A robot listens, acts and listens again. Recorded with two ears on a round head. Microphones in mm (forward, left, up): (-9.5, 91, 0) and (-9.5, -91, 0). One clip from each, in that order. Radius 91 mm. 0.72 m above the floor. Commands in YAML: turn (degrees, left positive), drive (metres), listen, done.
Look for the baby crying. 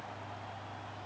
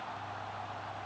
listen: true
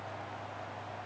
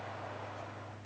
listen: true
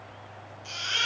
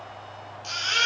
turn: -45
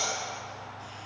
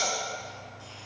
done: "Found it: a baby crying, straight ahead."